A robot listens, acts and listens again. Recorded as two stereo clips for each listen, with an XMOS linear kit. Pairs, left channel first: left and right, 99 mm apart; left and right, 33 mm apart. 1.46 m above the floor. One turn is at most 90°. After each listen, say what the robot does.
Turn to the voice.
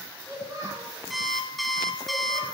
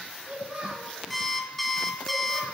Turn 40° right.
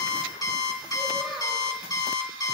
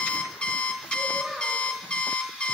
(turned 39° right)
Facing the child speaking, over 4 m away.